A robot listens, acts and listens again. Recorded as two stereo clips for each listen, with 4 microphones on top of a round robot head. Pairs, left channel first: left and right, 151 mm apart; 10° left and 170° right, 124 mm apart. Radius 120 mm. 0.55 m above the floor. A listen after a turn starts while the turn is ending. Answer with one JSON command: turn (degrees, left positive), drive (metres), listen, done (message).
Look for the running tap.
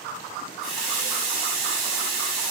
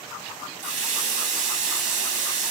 {"turn": -175}
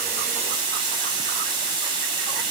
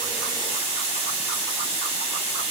{"turn": -30}
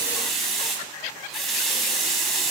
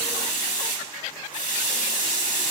{"done": "Facing the running tap."}